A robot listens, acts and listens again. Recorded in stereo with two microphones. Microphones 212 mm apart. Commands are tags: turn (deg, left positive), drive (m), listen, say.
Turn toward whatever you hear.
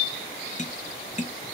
<turn deg="35"/>
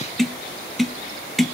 <say>Facing the tapping, under 1 m away.</say>